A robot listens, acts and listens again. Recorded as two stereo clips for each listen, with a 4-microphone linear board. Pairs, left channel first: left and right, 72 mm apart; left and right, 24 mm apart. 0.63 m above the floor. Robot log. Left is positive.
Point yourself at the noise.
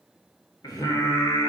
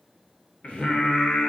note: The singing: about 65° left or 115° left.
cmd yaw +65
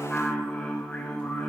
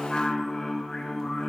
note: So it is at 15° left.
cmd yaw +15
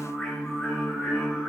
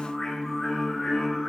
end: Facing the singing, over 4 m away.